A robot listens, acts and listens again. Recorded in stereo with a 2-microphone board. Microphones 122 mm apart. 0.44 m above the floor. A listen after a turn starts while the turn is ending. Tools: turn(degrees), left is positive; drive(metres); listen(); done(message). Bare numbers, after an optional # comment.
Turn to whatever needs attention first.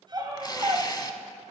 # The scream: about 30° right or 150° right.
turn(-30)
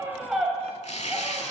done("Found it: a scream, straight ahead, 2 to 4 m away.")